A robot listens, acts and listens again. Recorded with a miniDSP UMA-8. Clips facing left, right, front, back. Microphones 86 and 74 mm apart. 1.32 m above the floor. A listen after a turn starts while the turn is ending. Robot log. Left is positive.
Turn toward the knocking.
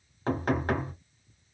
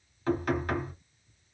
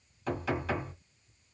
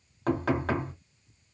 note: The knocking: 145° left.
cmd yaw +145
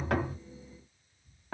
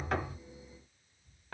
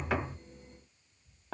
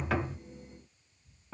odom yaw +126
note: The knocking is now 15° left.
cmd yaw +15
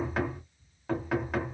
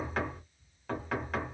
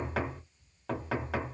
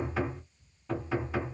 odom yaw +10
end: Facing the knocking.